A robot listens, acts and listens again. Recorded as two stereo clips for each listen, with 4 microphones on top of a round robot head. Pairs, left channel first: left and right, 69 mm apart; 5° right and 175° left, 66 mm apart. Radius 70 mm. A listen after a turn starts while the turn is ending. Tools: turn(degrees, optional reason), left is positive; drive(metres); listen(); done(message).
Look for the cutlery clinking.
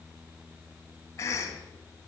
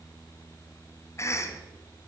listen()
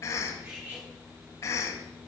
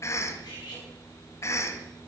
turn(degrees=-25, reason="The cutlery clinking: 25° right.")
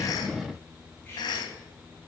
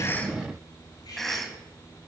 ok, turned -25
listen()
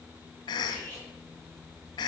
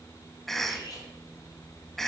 turn(degrees=20, reason="The cutlery clinking is now 20° left.")
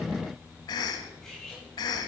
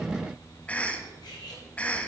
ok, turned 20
done("Found it: cutlery clinking, straight ahead.")